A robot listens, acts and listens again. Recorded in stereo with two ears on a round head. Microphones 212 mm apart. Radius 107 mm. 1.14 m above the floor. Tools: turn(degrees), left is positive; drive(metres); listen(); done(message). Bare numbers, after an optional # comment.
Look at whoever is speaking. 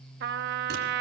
listen()
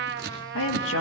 # The woman speaking: about 60° left or 120° left.
turn(60)
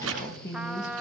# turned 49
# So it is at 15° left.
turn(15)
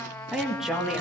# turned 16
done("Found it: a woman speaking, straight ahead, 1 to 2 m away.")